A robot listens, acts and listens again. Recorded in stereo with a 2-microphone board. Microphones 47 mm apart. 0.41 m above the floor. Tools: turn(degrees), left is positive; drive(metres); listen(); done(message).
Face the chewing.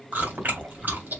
turn(degrees=-40)
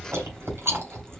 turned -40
turn(degrees=-100)
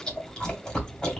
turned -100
turn(degrees=15)
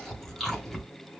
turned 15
done("Facing the chewing.")